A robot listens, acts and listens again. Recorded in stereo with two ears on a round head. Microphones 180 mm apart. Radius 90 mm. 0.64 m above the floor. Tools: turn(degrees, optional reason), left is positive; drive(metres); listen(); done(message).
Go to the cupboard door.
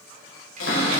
turn(degrees=70, reason="The cupboard door: about 70° left or 110° left.")
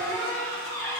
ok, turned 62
turn(degrees=15, reason="So it is at 15° left.")
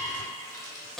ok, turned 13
drive(metres=1.0)
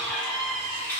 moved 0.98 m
turn(degrees=10, reason="The cupboard door is now 10° left.")
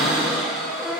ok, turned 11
drive(metres=1.0)
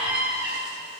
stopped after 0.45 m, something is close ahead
turn(degrees=-10, reason="The cupboard door is now 10° right.")
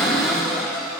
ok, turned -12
done("Arrived at the cupboard door, straight ahead.")